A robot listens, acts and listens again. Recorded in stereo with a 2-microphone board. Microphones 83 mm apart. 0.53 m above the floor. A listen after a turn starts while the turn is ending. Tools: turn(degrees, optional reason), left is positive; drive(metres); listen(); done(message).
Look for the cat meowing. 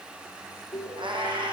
turn(degrees=-90)
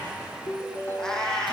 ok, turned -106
done("Facing the cat meowing.")